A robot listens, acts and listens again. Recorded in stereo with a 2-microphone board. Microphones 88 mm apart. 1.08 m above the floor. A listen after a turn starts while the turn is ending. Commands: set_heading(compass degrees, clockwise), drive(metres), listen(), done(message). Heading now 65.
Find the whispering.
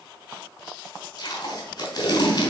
listen()
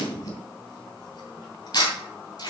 listen()
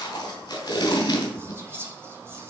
set_heading(95)
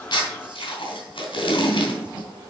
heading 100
listen()
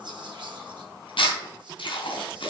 listen()
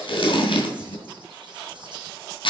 done("I heard whispering, but can't make it out now. It was about 5° left or 115° right.")